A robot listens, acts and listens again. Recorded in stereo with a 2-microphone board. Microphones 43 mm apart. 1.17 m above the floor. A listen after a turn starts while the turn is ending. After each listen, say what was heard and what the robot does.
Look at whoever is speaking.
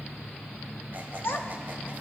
The child speaking: about 65° left or 115° left. Turn 65° left.
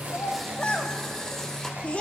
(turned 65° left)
So it is at 35° left. Turn 35° left.
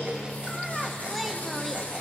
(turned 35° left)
Keep listening.
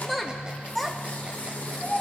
Facing the child speaking, 1 to 2 m away.